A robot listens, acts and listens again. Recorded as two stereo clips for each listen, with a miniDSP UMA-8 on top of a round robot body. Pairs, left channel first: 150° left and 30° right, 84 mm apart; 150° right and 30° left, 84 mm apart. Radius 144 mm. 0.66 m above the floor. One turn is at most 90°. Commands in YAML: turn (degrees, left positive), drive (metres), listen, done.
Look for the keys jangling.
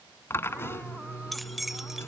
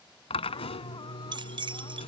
turn: 55
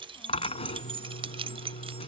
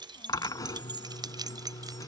turn: -15
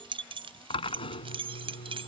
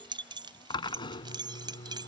turn: -10
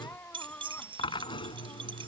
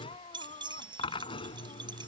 done: "Found it: keys jangling, straight ahead."